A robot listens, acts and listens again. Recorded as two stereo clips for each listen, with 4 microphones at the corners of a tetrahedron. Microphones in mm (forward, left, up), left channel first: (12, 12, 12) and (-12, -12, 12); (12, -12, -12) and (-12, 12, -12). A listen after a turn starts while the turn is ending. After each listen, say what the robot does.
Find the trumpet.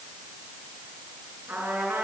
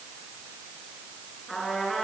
Turn 130° right.
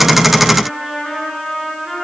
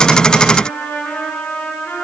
Turn 40° right.
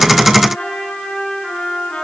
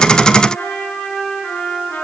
Turn 15° right.
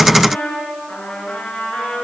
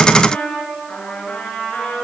Facing the trumpet, over 4 m away.